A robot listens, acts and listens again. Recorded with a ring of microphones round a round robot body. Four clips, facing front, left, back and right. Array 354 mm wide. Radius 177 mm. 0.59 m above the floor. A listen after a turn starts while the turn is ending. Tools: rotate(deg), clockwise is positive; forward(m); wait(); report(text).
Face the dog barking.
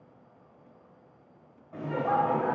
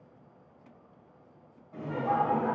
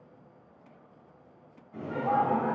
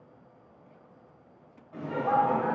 wait()
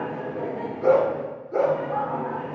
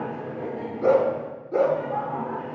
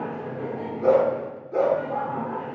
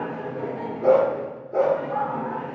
rotate(-70)
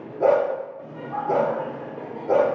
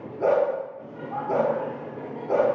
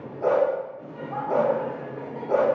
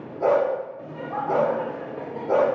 rotate(20)
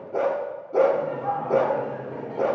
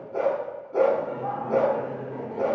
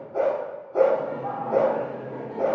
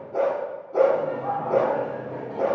report("Found it: a dog barking, straight ahead, over 4 m away.")